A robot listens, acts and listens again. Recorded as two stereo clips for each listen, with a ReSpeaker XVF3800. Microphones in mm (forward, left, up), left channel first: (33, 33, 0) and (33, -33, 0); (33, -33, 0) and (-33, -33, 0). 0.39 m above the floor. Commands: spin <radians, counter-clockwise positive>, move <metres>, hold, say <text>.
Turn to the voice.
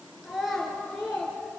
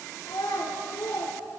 say Facing the child speaking.